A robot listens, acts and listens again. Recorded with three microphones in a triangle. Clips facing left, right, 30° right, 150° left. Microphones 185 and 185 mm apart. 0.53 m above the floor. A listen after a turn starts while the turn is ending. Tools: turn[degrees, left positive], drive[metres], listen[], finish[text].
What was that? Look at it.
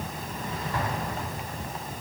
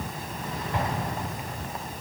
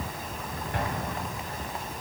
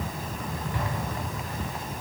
Thought: The explosion: 20° right.
Action: turn[-20]
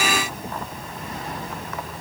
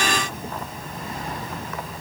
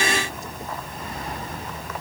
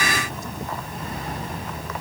Action: finish[Facing where the explosion came from. I can't hear it now.]